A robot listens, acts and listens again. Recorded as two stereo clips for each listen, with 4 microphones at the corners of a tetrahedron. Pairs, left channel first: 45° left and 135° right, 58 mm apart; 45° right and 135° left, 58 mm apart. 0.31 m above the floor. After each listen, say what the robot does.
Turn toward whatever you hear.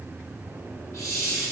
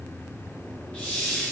Turn 20° left.
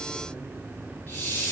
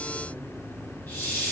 Found it: a hiss, straight ahead, 1 to 2 m away.